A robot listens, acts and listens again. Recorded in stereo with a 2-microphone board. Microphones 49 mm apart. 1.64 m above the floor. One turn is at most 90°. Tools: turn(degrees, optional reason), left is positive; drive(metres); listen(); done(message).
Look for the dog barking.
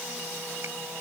listen()
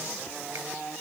listen()
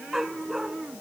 turn(degrees=-30)
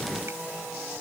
listen()
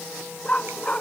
turn(degrees=25, reason="So it is at 25° left.")
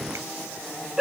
turn(degrees=-15, reason="The dog barking is now 15° right.")
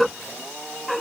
done("Found it: a dog barking, straight ahead.")